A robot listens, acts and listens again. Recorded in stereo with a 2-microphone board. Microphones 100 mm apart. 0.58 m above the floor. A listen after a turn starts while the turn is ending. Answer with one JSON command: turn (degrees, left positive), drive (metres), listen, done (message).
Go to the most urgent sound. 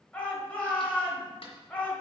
{"turn": 15}
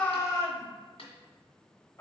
{"turn": 150}
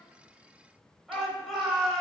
{"drive": 1.0}
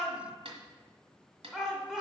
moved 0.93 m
{"drive": 1.0}
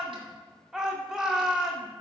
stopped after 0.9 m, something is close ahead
{"turn": -10}
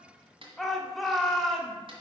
{"done": "Arrived at the shout, straight ahead."}